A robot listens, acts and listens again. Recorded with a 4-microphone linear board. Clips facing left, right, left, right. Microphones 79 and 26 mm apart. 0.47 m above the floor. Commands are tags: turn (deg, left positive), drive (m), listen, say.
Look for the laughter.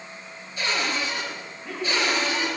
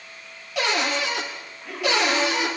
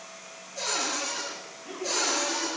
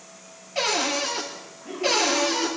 <turn deg="30"/>
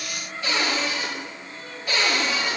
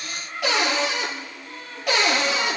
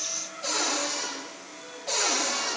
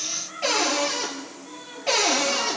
<turn deg="-40"/>
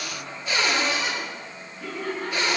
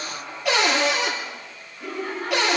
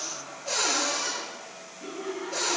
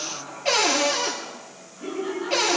<turn deg="-10"/>
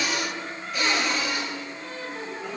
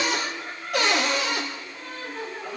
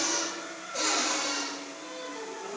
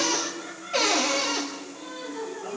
<say>Facing the laughter.</say>